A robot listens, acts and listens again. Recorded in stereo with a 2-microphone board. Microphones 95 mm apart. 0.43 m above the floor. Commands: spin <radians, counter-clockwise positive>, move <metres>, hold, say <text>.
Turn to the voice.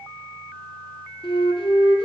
hold
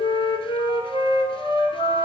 hold
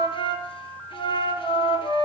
say I can't make out anyone speaking to turn to.